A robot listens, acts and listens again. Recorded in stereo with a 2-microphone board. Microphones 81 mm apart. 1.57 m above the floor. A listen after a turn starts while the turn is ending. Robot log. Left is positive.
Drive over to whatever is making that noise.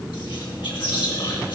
cmd yaw +90
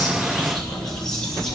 cmd fwd 1.0
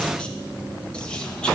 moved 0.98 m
cmd idle
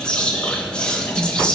note: The whispering is now 10° left.
cmd yaw +10
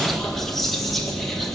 cmd fwd 1.0
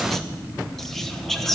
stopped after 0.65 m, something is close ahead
end: I am next to the whispering.